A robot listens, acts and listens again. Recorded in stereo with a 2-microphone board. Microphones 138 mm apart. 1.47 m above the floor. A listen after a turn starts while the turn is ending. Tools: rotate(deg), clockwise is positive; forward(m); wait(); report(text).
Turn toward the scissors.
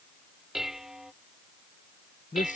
wait()
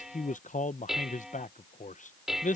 wait()
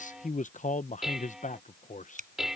rotate(65)
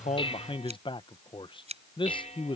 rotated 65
rotate(50)
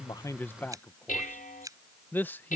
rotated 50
rotate(25)
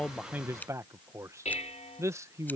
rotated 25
rotate(-10)
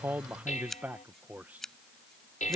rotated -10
report("Facing the scissors.")